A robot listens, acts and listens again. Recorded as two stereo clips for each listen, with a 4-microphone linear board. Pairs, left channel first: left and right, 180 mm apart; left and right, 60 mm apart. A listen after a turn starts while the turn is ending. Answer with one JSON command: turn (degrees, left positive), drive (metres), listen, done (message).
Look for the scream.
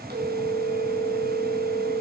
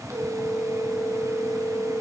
{"listen": true}
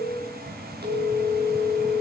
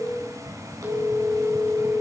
{"listen": true}
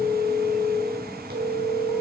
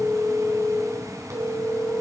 {"done": "I can't make out a scream, only a phone ringing."}